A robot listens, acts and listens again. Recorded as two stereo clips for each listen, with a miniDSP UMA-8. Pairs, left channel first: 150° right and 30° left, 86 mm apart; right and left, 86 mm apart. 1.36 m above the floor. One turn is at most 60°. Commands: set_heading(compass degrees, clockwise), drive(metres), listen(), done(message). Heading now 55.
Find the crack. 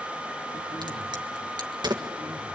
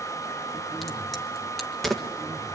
done("Facing the crack, 1 to 2 m away.")